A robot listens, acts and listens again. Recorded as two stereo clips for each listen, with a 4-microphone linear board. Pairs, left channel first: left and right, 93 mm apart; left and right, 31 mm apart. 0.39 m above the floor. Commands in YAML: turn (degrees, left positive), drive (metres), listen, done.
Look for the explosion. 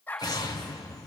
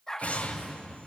turn: 50
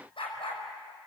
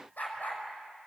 listen: true
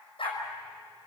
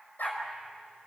done: "I heard an explosion, but can't make it out now. It was about straight ahead or 80° left."